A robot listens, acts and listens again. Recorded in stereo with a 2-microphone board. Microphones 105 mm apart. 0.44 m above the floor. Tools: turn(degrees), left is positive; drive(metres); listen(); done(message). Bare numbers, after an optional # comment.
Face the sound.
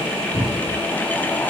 # The cupboard door: about 25° left or 155° left.
turn(25)
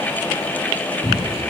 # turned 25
done("Found it: a cupboard door, straight ahead, 2 to 4 m away.")